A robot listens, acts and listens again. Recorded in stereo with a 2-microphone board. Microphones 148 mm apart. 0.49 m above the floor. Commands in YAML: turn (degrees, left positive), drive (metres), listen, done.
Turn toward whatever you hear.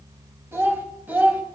turn: -30
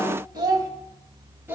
turn: -30
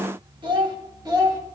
turn: -155
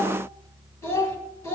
turn: 20
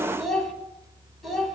done: "Facing the child speaking."